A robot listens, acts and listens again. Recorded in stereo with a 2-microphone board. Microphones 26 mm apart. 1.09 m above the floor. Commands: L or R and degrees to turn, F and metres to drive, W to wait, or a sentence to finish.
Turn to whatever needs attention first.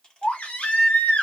L90
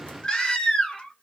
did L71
L35
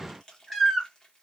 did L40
Found it: a baby crying, straight ahead, 1 to 2 m away.